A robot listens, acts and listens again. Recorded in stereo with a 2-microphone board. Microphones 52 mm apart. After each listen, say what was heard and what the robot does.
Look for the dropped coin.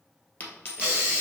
The dropped coin: about 40° left or 140° left. Turn 40° left.
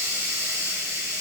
Keep listening.
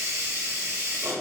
I heard a dropped coin, but can't make it out now. It was about straight ahead or 100° left.